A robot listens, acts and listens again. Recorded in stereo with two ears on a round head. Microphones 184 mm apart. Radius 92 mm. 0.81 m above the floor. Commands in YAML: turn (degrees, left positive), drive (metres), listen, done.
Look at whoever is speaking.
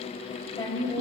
turn: 15
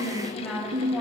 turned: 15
done: "Found it: a woman speaking, straight ahead."